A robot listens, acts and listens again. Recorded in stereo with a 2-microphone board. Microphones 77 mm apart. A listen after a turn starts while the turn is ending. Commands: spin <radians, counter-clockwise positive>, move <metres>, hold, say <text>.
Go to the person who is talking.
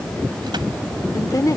spin 0.87
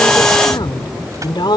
spin 1.48
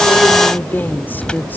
spin 0.44
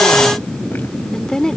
spin 0.17
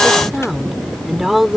move 1.0
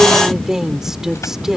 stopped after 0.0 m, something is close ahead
say Blocked. The woman speaking is further on, straight ahead.